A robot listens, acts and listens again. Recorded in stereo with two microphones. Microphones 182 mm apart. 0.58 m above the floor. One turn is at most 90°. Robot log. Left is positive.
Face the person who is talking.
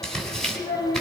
note: The child speaking: about 70° left or 110° left.
cmd yaw +70
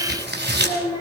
note: So it is at 35° left.
cmd yaw +35
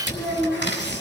note: The child speaking is now 10° right.
cmd yaw -10
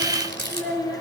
end: Found it: a child speaking, straight ahead.